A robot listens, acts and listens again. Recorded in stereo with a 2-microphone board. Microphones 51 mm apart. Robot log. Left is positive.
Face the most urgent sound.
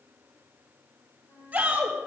note: The shout: about 30° right or 150° right.
cmd yaw -30
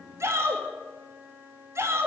note: So it is at 120° right.
cmd yaw -120
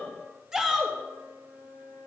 note: The shout is now 10° right.
cmd yaw -10
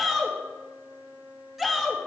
end: Found it: a shout, straight ahead.